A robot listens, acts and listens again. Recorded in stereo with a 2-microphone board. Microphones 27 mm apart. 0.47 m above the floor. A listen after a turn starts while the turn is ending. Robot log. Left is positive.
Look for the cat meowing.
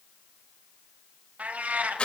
cmd yaw -90
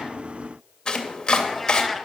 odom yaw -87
end: Found it: a cat meowing, straight ahead, 1 to 2 m away.